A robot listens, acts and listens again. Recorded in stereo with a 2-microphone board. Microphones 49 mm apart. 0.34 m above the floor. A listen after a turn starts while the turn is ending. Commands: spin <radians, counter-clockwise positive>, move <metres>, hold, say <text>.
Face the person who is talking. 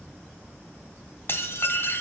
hold
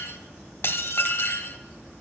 hold
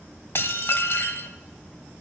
say I can't make out anyone speaking, only dishes clattering.